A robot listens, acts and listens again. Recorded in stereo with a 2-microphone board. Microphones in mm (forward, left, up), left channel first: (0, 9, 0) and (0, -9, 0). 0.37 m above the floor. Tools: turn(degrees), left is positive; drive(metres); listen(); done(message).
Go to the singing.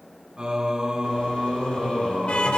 turn(degrees=-45)
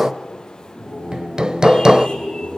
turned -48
turn(degrees=-80)
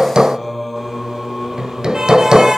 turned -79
drive(metres=1.0)
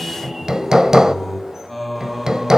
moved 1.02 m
drive(metres=1.0)
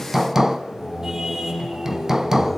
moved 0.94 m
drive(metres=1.0)
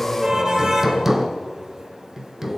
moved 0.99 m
drive(metres=1.0)
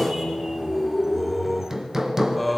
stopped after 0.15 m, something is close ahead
turn(degrees=10)
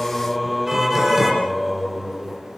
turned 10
done("Arrived at the singing, straight ahead.")